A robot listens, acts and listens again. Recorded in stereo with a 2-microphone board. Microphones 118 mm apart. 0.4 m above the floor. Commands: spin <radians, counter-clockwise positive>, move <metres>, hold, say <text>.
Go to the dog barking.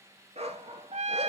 spin -1.05
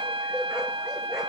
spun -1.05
hold
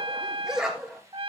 move 1.0
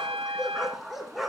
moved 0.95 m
move 1.0
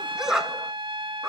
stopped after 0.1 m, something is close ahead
say Arrived at the dog barking, straight ahead.